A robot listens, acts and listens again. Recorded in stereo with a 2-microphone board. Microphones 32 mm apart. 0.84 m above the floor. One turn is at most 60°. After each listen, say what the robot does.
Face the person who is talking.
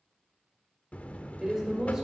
Turn 15° right.
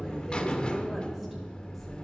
Keep listening.
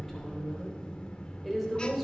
Facing the woman speaking, 2 to 4 m away.